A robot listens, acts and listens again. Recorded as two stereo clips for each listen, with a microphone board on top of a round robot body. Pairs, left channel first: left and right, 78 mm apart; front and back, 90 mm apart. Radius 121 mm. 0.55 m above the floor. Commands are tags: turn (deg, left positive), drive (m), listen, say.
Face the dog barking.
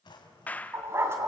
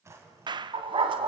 <turn deg="-150"/>
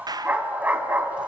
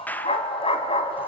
<turn deg="-20"/>
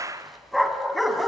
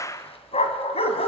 <say>Facing the dog barking, 2 to 4 m away.</say>